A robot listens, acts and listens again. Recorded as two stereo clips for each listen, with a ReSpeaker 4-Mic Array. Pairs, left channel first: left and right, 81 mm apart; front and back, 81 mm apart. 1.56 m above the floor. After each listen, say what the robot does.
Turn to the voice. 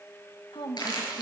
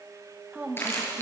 Turn 110° left.
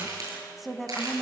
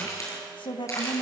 Found it: a woman speaking, straight ahead, 2 to 4 m away.